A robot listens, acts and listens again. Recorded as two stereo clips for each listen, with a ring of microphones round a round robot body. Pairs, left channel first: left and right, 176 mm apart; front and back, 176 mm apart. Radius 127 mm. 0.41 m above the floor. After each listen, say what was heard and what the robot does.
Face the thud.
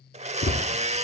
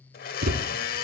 The thud: 145° left. Turn 145° left.
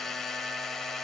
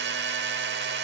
Facing where the thud came from. I can't hear it now.